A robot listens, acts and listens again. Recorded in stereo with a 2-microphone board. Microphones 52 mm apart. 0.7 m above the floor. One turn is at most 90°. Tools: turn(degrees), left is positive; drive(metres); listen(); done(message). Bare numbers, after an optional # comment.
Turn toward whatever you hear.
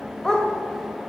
turn(30)
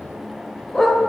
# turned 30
turn(30)
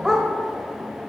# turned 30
done("Found it: a dog barking, straight ahead, 1 to 2 m away.")